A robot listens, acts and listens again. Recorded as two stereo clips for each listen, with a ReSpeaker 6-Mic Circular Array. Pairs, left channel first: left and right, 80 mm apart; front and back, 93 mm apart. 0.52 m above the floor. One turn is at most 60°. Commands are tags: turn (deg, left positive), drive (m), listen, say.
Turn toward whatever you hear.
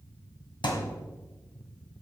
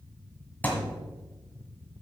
<turn deg="60"/>
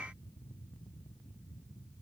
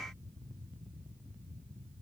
<turn deg="10"/>
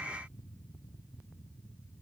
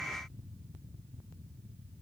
<say>I heard a thud from this way, but can't make it out now.</say>